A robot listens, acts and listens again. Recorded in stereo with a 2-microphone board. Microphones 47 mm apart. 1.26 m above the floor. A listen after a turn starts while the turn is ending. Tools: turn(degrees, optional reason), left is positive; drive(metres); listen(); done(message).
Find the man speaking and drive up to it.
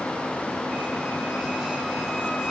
listen()
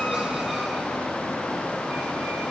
listen()
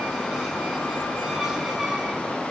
done("I can't make out a man speaking.")